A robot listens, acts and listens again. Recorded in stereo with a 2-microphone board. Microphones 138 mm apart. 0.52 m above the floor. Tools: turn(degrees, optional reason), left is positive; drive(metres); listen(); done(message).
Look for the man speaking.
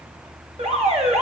listen()
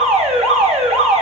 listen()
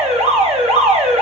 done("I can't make out a man speaking to turn to.")